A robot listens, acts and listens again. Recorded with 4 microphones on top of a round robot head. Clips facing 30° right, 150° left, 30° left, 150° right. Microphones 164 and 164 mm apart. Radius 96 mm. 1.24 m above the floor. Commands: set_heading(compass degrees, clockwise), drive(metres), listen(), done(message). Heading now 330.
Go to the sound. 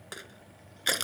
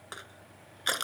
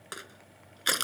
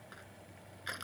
set_heading(290)
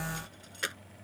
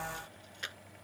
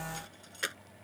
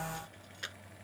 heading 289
drive(1.0)
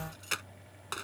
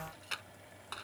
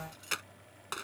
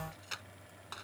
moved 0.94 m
drive(1.0)
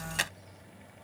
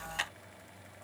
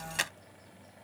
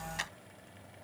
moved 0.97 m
drive(1.0)
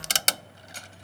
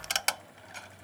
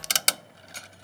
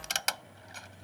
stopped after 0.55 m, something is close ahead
set_heading(279)
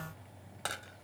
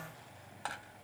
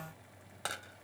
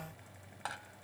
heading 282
listen()
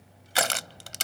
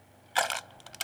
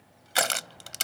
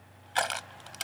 done("Arrived at the crushing, straight ahead.")